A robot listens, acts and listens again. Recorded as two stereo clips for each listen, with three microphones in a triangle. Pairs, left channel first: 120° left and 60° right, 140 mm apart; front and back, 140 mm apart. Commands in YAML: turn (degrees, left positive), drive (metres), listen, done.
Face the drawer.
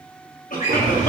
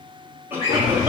turn: -40
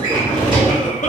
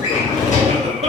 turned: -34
turn: -10
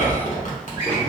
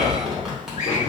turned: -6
done: "Found it: a drawer, straight ahead."